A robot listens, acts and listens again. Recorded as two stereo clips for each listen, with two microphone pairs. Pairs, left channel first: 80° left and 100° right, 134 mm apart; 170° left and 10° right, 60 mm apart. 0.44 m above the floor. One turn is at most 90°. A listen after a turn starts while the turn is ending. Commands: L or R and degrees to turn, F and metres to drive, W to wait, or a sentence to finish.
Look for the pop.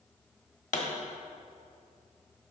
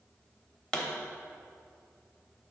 L90
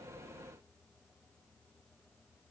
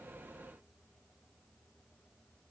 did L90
L10
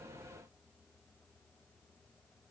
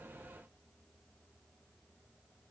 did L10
I heard a pop from this way, but can't make it out now.